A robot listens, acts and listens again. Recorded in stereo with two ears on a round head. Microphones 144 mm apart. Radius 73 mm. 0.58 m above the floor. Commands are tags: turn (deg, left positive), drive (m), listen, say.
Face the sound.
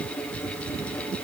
<listen/>
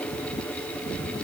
<listen/>
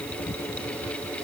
<say>I can't make out anything.</say>